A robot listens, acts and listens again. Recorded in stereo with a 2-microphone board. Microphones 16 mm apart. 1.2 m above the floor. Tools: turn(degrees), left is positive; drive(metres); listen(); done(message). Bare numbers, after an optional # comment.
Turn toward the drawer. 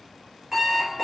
listen()
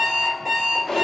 # The drawer: about 40° left or 140° left.
turn(40)
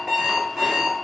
listen()
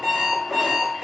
listen()
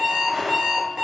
done("Found it: a drawer, straight ahead.")